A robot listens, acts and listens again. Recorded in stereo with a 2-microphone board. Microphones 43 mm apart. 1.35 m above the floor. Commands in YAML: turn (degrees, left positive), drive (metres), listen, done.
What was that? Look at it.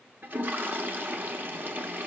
turn: -45
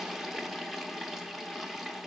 done: "Facing the toilet flushing, under 1 m away."